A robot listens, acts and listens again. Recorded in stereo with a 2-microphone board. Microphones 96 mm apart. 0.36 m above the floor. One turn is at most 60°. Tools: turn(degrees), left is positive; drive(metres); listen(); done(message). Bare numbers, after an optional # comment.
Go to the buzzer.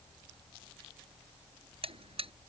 turn(-60)
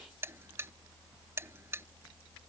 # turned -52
# So it is at 25° right.
turn(-25)
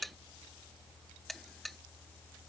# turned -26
drive(1.0)
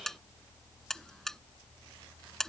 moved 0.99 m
drive(1.0)
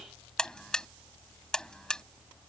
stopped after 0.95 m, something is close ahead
# The buzzer is now 10° left.
turn(10)
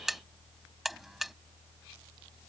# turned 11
done("I am next to the buzzer.")